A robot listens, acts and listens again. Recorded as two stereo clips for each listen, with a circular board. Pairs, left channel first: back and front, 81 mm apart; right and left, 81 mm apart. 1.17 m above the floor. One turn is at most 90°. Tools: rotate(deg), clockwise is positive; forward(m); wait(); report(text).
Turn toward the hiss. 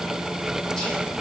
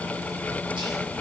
wait()
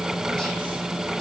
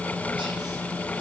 wait()
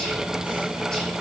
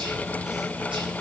report("I can't make out a hiss to turn to.")